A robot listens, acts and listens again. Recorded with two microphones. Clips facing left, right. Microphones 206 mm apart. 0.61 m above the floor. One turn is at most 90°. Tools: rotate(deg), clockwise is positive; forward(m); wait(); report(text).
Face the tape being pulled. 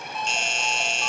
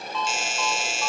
wait()
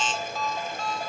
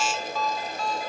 wait()
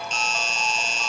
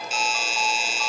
report("I can't make out tape being pulled to turn to.")